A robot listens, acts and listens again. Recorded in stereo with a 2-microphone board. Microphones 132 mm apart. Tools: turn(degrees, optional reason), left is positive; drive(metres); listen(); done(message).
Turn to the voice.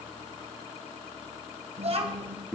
turn(degrees=-50, reason="The child speaking: about 50° right or 130° right.")
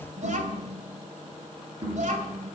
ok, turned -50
turn(degrees=-75, reason="So it is at 75° right.")
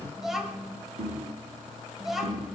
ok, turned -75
done("Facing the child speaking.")